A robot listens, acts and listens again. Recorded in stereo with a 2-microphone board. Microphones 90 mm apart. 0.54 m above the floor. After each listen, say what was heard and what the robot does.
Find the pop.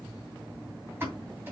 The pop: about 25° right or 155° right. Turn 25° right.
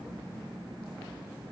Keep listening.
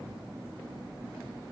I heard a pop, but can't make it out now. It was about straight ahead or 130° right.